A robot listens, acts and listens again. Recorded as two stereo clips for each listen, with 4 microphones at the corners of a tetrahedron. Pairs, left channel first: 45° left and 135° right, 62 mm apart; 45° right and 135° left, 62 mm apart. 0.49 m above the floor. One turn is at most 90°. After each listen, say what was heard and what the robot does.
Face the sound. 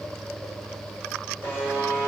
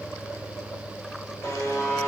The buzzer: 15° right. Turn 15° right.
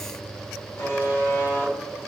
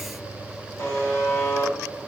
Facing the buzzer, 1 to 2 m away.